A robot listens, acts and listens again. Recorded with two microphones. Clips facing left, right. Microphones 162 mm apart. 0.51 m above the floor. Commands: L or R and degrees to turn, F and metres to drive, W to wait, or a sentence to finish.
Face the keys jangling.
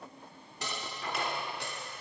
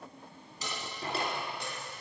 L65
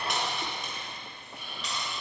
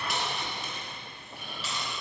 Facing the keys jangling, 2 to 4 m away.